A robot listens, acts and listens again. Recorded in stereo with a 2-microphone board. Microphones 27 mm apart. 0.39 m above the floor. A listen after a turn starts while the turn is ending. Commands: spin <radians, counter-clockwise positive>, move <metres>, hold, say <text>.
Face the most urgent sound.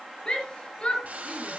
spin 0.61
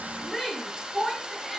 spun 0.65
say Found it: a shout, straight ahead, over 4 m away.